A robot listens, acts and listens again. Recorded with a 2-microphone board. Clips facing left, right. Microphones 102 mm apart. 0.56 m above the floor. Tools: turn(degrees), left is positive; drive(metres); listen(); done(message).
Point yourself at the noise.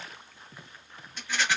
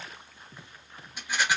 turn(degrees=-30)
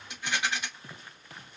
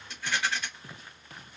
turn(degrees=15)
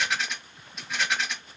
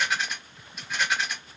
done("Found it: a rattle, straight ahead.")